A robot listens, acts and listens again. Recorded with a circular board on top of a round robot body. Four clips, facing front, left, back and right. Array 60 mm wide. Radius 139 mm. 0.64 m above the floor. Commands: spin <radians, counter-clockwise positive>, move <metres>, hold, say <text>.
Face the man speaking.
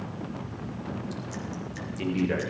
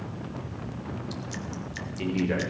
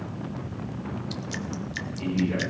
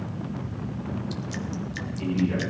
spin 0.79
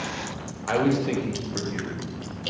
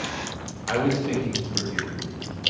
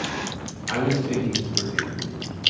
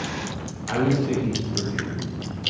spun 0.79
spin 0.52
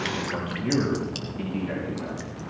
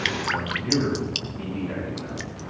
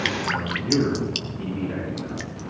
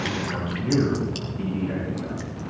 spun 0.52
say Found it: a man speaking, straight ahead, over 4 m away.